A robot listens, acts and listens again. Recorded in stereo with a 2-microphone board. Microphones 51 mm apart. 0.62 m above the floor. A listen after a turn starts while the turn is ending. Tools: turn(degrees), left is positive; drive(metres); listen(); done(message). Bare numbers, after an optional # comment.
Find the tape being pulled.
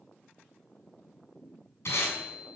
# The tape being pulled: about 60° left or 120° left.
turn(60)
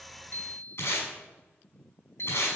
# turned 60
# So it is at 60° left.
turn(60)
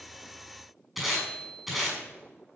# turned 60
done("Found it: tape being pulled, straight ahead.")